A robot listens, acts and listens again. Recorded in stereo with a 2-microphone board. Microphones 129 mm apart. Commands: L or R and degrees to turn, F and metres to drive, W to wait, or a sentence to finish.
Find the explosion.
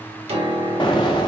L35
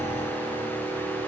W
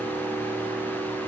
I heard an explosion, but can't make it out now. It was about straight ahead or 110° left.